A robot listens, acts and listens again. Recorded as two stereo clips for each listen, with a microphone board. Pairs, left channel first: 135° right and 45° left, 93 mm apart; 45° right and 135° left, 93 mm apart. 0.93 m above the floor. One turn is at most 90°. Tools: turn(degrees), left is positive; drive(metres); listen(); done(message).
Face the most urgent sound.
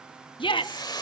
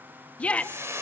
turn(degrees=-90)
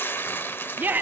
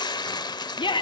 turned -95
turn(degrees=-25)
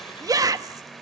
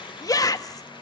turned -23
done("Found it: a shout, straight ahead, 1 to 2 m away.")